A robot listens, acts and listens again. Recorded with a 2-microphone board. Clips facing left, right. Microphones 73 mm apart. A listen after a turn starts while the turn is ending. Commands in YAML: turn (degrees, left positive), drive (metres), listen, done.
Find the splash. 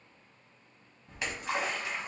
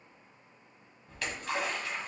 turn: 20
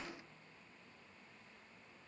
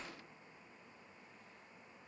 listen: true
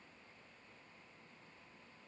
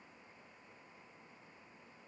done: "I heard a splash, but can't make it out now. It was about straight ahead or 140° left."